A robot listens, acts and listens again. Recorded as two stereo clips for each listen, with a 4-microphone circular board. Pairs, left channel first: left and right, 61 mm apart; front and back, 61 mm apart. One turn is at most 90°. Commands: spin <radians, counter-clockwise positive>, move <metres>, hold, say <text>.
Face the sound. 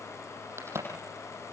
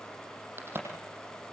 spin -1.57
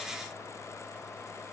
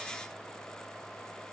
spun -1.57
spin -0.70
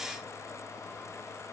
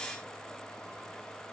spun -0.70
say I heard a crack from this way, but can't make it out now.